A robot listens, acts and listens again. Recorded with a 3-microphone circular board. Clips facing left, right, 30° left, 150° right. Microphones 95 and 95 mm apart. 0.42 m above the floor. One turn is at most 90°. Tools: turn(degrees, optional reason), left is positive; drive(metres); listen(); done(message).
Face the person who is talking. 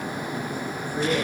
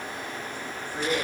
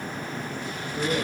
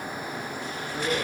turn(degrees=-90, reason="The man speaking: 175° right.")
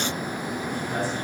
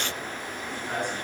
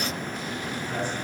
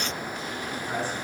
turn(degrees=-85, reason="Nothing new. It was at 85° right.")
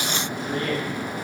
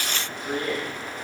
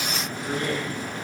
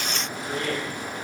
turn(degrees=-45, reason="The man speaking is now 45° right.")
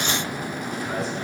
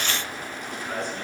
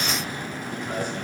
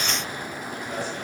done("Facing the man speaking.")